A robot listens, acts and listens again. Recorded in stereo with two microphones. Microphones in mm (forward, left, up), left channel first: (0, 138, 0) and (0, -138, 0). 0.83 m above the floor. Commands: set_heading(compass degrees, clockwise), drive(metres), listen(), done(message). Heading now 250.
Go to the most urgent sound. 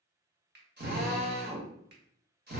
listen()
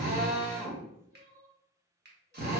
set_heading(320)
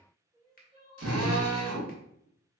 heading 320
set_heading(345)
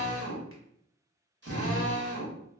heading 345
listen()
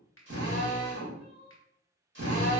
drive(1.0)
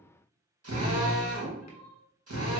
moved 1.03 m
set_heading(355)
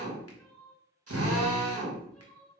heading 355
drive(1.0)
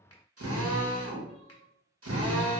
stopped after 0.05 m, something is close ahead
listen()
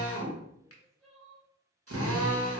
done("Arrived at the crying, straight ahead.")